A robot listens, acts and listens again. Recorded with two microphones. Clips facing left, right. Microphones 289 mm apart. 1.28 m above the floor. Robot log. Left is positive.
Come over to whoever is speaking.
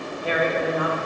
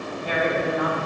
cmd yaw +90
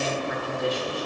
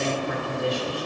cmd fwd 1.0
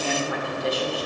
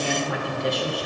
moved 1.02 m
cmd fwd 1.0
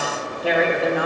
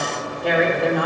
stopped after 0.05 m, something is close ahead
end: Arrived at the woman speaking, straight ahead.